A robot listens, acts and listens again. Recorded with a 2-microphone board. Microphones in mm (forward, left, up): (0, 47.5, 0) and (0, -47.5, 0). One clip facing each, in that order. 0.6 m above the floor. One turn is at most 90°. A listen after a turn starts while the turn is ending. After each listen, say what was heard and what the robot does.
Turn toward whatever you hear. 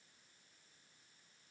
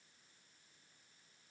Keep listening.
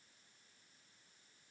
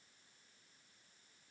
Keep listening.
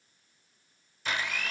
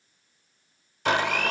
The blender: about 65° right or 115° right. Turn 65° right.
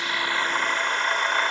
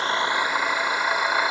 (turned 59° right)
So it is at 10° right. Turn 10° right.
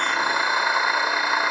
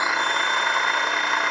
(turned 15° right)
Facing the blender.